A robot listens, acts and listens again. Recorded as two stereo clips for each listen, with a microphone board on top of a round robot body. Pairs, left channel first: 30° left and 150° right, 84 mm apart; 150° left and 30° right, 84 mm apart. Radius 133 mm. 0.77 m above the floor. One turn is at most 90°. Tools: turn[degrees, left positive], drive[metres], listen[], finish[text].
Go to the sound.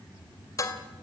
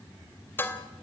Thought: The dishes clattering: 85° left.
Action: turn[85]
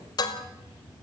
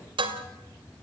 Thought: The dishes clattering is now 10° right.
Action: turn[-10]
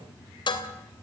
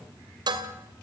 Action: drive[1.0]
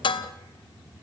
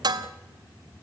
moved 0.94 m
Action: drive[1.0]
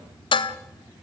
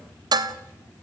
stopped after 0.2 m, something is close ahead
Thought: The dishes clattering is now 10° left.
Action: turn[10]
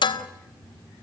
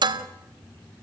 Action: finish[Arrived at the dishes clattering, straight ahead.]